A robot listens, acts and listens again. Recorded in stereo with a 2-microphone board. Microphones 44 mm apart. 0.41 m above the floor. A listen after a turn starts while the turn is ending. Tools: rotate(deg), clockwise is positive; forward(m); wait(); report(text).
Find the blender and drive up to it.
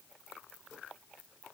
wait()
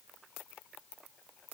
wait()
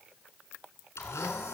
rotate(-90)
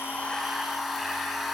forward(1.0)
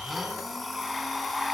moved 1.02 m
forward(1.0)
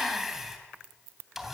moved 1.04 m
forward(1.0)
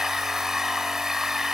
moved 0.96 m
rotate(10)
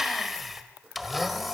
forward(1.0)
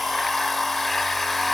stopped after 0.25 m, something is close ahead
report("Arrived at the blender, straight ahead.")